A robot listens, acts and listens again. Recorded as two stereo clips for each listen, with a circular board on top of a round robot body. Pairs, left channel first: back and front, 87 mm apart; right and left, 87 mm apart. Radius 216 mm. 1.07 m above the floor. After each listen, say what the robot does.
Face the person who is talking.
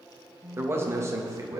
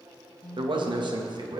Turn 55° left.
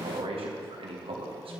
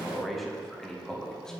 Turn 10° right.
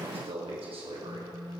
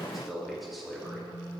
Facing the man speaking.